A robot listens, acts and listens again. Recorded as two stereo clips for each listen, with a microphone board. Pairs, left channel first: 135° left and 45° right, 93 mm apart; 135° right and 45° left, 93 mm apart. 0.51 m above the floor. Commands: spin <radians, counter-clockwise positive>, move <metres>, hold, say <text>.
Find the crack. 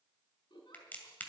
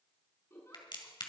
spin -2.71
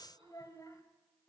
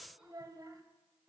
say I heard a crack from this way, but can't make it out now.